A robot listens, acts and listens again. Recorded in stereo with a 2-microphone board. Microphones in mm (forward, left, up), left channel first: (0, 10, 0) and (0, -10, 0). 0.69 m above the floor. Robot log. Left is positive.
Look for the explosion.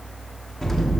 cmd yaw +30
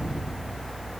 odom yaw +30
note: So it is at 135° left.
cmd yaw +135
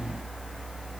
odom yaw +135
end: Facing where the explosion came from. I can't hear it now.